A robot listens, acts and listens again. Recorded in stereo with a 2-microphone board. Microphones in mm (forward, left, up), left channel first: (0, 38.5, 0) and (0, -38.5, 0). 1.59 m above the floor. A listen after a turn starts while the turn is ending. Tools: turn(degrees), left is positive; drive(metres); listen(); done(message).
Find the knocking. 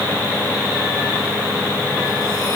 listen()
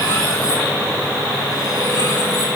listen()
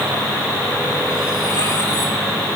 done("I can't make out knocking to turn to.")